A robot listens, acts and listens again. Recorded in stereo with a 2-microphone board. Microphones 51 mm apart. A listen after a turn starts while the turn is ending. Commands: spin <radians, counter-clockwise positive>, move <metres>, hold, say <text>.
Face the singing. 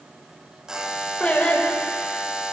spin 0.44
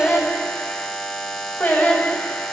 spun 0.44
spin 0.61
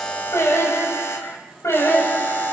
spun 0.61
spin 2.09
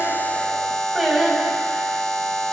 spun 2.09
say Facing the singing.